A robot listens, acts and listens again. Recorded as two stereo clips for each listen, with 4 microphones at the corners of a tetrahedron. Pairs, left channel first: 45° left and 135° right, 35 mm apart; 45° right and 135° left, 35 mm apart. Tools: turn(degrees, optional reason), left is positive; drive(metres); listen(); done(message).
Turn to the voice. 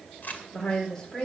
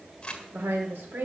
turn(degrees=115, reason="The woman speaking: 115° left.")
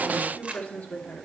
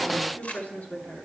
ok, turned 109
done("Found it: a woman speaking, straight ahead.")